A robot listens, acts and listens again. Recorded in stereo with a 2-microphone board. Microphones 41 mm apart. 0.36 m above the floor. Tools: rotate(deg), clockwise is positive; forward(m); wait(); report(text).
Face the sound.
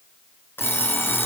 rotate(-70)
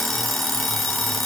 report("Facing the alarm clock.")